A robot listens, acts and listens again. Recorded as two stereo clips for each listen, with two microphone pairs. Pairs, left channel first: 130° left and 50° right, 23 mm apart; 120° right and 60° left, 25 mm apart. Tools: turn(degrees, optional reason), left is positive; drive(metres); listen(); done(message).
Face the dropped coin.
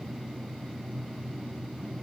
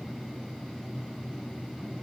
listen()
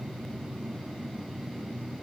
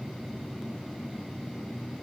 listen()
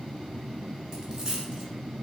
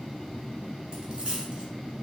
turn(degrees=10, reason="The dropped coin: 10° left.")
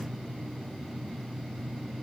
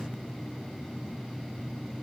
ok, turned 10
done("I heard a dropped coin from this way, but can't make it out now.")